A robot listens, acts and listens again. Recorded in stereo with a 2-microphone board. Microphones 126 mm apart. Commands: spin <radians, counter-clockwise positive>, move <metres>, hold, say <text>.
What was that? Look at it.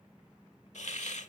spin 1.22
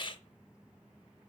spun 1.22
spin 0.70
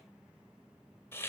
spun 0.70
spin 0.35
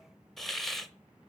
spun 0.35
say Found it: a hiss, straight ahead.